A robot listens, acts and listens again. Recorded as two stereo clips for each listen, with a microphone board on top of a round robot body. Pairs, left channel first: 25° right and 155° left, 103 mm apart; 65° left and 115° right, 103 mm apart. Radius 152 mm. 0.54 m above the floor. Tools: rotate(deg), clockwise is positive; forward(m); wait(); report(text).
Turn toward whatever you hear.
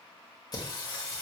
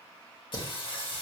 rotate(-35)
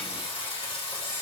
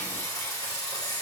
rotate(-15)
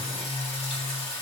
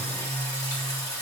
rotate(-15)
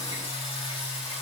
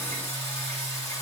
report("Found it: singing, straight ahead.")